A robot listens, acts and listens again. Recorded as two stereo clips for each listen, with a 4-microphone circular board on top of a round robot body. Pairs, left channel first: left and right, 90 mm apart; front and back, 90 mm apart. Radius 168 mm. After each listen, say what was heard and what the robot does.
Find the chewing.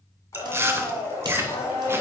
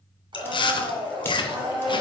The chewing: 25° right. Turn 25° right.
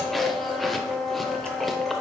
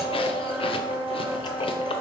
Keep listening.
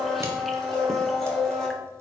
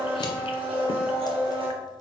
Keep listening.
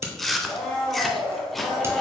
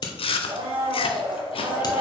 Found it: chewing, straight ahead, under 1 m away.